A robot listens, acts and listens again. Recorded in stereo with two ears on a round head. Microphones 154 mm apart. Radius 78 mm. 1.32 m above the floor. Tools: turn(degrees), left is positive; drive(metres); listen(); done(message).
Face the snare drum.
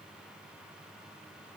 listen()
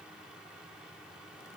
listen()
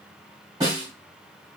turn(degrees=-25)
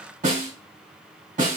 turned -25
turn(degrees=-130)
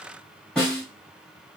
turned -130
done("Found it: a snare drum, straight ahead.")